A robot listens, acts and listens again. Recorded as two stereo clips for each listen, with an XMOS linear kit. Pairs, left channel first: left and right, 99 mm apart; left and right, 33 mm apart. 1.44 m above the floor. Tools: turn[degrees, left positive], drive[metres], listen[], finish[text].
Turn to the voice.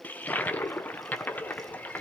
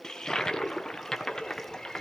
Action: listen[]
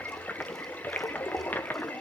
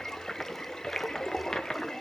Action: listen[]
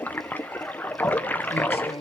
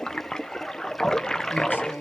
Thought: The man speaking: about 75° left or 105° left.
Action: turn[75]
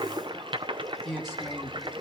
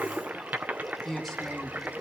Action: finish[Facing the man speaking.]